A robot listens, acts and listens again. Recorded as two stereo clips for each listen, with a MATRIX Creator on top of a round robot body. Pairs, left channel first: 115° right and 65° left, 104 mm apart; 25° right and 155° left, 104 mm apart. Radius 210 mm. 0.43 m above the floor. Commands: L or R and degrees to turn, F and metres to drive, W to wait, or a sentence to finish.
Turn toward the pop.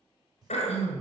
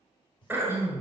L15
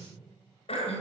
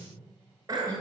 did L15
Facing where the pop came from. I can't hear it now.